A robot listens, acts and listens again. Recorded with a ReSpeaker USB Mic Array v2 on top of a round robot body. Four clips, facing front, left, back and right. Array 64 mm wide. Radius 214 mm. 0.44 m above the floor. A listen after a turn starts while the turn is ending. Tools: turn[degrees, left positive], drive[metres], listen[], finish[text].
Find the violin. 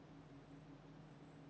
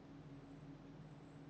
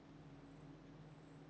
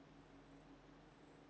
Action: listen[]
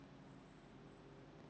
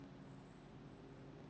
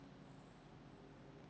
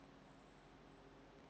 Action: listen[]
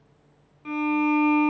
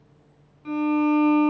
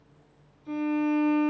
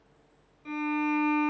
Thought: The violin: 20° left.
Action: turn[20]
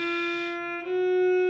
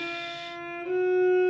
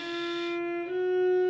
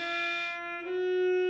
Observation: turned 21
Action: finish[Found it: a violin, straight ahead, 1 to 2 m away.]